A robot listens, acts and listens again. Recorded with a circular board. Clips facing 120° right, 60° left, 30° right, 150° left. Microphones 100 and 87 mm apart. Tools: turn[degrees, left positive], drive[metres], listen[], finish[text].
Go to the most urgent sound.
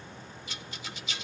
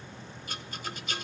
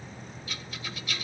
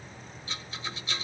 Action: listen[]
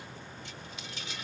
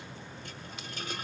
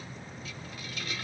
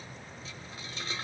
Action: listen[]
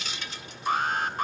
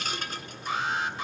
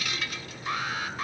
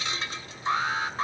Thought: The alarm: 155° right.
Action: turn[-155]
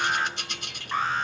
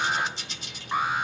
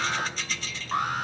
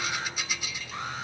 Thought: The alarm is now 15° right.
Action: turn[-15]
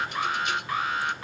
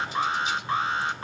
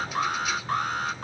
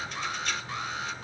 Action: drive[1.0]
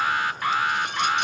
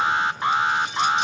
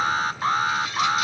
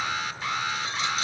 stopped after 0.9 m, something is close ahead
Action: finish[Arrived at the alarm, straight ahead.]